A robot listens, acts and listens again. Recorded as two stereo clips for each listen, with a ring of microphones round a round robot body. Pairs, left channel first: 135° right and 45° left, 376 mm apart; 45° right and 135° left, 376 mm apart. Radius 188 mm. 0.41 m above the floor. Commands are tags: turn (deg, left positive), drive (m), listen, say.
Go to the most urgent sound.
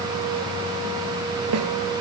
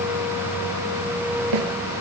<listen/>
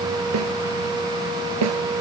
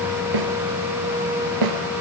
<listen/>
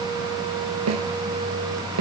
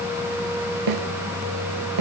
<say>I can't make out anything urgent to turn to.</say>